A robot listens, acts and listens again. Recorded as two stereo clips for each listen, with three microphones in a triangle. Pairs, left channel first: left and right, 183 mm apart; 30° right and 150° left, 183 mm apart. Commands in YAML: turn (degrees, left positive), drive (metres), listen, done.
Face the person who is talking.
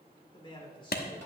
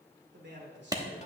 turn: 150
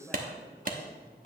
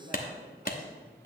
turn: 10
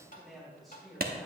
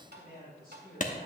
done: "Facing the man speaking, over 4 m away."